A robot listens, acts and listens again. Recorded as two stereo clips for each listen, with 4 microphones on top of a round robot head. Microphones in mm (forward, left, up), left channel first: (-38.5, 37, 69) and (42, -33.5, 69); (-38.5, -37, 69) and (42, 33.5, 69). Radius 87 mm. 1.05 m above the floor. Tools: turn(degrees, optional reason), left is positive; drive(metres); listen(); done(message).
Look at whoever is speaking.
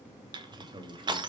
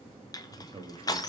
done("Found it: a man speaking, straight ahead.")